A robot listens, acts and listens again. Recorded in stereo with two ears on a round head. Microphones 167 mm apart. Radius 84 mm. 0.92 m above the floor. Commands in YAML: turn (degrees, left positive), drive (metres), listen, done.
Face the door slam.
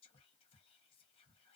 listen: true
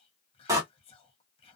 turn: -20
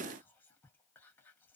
listen: true
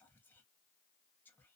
done: "I heard a door slam, but can't make it out now. It was about straight ahead or 140° right."